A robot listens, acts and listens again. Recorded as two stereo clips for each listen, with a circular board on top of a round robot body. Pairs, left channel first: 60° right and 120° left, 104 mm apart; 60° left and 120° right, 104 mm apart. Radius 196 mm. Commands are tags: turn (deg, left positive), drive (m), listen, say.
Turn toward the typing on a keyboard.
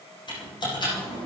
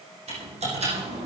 <turn deg="-105"/>
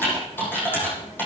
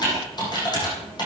<turn deg="10"/>
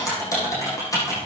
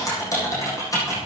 <say>Found it: typing on a keyboard, straight ahead, over 4 m away.</say>